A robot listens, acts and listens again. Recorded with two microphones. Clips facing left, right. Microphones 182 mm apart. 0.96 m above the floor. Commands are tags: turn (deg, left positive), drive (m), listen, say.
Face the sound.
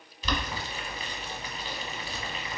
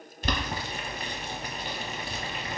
<turn deg="-55"/>
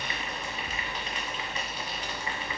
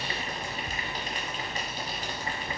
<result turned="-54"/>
<turn deg="-50"/>
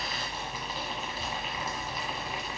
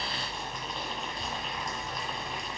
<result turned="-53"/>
<say>Found it: boiling, straight ahead.</say>